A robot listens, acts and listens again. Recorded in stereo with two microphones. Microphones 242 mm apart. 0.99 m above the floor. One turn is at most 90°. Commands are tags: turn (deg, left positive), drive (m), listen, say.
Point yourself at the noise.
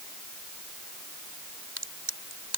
<turn deg="-90"/>
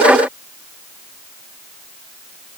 <say>I heard a crack from this way, but can't make it out now.</say>